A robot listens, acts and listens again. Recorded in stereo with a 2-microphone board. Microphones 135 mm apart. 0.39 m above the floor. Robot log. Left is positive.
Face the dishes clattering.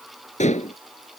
note: The dishes clattering: about 60° left or 120° left.
cmd yaw +60
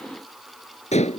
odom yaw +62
note: So it is at 55° left.
cmd yaw +55
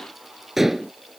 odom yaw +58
end: Facing the dishes clattering.